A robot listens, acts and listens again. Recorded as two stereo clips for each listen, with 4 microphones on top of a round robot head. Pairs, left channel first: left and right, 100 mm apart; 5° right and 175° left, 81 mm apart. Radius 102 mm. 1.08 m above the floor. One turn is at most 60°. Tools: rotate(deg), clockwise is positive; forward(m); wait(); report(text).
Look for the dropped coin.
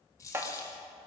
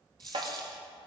rotate(-60)
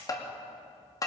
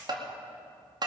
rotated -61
rotate(-60)
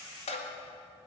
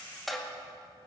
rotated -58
rotate(-25)
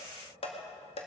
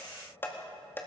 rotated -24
report("Facing where the dropped coin came from. I can't hear it now.")